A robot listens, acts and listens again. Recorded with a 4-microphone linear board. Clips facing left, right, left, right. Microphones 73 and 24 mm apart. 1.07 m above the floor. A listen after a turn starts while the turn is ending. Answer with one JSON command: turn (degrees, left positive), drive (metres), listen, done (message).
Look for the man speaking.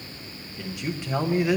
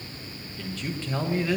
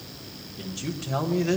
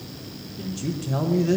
{"turn": 15}
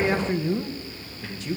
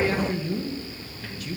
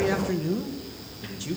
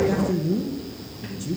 {"turn": 155}
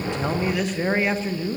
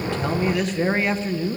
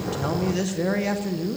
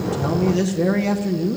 {"done": "Facing the man speaking."}